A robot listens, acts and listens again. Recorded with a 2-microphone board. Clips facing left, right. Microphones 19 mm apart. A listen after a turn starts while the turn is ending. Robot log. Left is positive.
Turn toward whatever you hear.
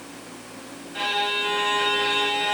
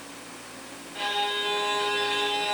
note: The violin: about 30° left or 150° left.
cmd yaw +30
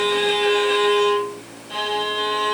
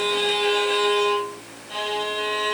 end: Found it: a violin, straight ahead, 1 to 2 m away.